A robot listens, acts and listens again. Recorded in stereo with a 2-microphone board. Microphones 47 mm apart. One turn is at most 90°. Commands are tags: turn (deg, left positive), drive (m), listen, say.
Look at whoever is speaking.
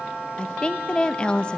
<turn deg="20"/>
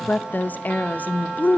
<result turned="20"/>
<turn deg="90"/>
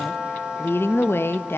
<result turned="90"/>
<turn deg="65"/>
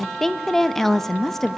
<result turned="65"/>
<turn deg="10"/>
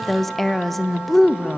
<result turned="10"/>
<say>Found it: a woman speaking, straight ahead.</say>